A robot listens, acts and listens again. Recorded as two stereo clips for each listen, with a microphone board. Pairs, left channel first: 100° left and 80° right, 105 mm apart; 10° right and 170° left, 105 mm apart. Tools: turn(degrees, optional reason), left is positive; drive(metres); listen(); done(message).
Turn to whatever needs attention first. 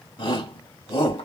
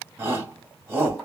turn(degrees=110, reason="The shout: 110° left.")
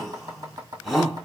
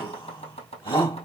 turn(degrees=10, reason="The shout is now 10° left.")
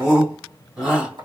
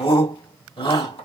done("Facing the shout.")